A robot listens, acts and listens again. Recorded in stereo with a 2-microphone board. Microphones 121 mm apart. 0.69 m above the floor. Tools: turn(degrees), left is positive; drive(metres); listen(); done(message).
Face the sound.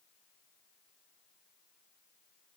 listen()
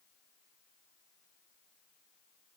listen()
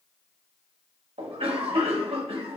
turn(degrees=-55)
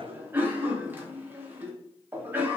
turn(degrees=-20)
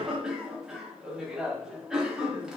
done("Found it: a cough, straight ahead.")